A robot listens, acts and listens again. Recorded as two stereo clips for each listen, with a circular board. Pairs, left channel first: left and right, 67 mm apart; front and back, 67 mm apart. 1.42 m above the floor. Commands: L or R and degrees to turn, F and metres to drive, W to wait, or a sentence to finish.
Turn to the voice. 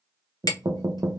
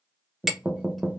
W
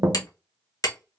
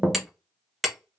W
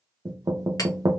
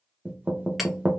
I can't make out anyone speaking to turn to.